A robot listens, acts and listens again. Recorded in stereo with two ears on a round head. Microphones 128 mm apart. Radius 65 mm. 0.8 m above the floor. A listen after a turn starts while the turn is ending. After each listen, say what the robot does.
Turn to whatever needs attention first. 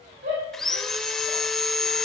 Turn 75° right.
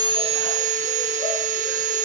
Keep listening.
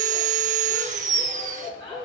Facing the shout.